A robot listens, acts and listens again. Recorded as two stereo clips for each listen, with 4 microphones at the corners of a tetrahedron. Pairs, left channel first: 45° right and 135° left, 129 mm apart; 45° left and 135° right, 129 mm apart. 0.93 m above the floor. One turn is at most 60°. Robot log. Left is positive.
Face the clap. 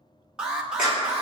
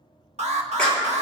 note: The clap: 40° right.
cmd yaw -40
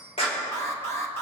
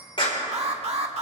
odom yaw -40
end: Found it: a clap, straight ahead.